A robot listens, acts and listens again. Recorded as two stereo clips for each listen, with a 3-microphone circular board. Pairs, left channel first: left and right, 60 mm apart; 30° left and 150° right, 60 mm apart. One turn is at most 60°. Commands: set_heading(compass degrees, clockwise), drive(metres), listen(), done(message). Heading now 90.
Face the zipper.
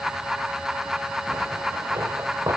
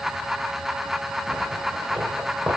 set_heading(150)
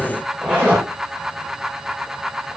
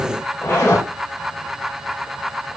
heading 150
set_heading(175)
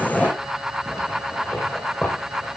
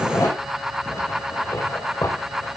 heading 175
done("Facing the zipper, over 4 m away.")